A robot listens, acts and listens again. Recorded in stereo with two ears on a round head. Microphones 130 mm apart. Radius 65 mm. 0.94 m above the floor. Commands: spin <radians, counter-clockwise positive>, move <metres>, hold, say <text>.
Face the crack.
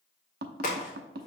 spin 0.96
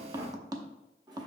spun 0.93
hold
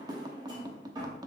say I heard a crack, but can't make it out now. It was about straight ahead or 70° left.